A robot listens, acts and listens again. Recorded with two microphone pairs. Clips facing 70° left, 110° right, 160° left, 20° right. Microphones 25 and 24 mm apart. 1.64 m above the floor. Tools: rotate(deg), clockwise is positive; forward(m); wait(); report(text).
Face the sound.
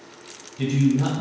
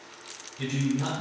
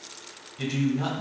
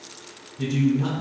rotate(-145)
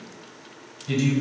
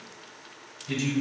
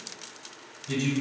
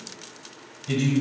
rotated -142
report("Facing the man speaking, 1 to 2 m away.")